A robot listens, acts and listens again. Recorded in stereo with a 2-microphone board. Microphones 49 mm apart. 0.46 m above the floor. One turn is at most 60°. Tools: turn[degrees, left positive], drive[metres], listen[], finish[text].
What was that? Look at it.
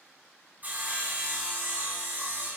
Thought: The sawing: about 35° right or 145° right.
Action: turn[-35]
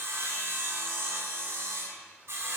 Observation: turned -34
Thought: So it is at 110° right.
Action: turn[-60]
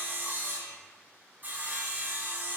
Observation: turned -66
Thought: The sawing is now 45° right.
Action: turn[-45]
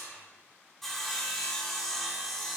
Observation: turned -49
Action: finish[Found it: sawing, straight ahead.]